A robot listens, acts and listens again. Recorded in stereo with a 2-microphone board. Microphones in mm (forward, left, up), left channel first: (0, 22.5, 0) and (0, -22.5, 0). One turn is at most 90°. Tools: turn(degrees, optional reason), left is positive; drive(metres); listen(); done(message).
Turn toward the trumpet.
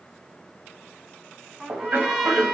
turn(degrees=-30)
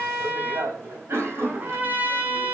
turn(degrees=-90, reason="So it is at 140° right.")
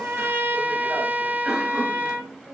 turn(degrees=-45, reason="The trumpet is now 45° right.")
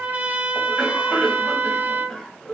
turn(degrees=-35, reason="The trumpet is now 35° right.")
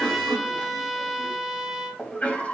done("Found it: a trumpet, straight ahead, 1 to 2 m away.")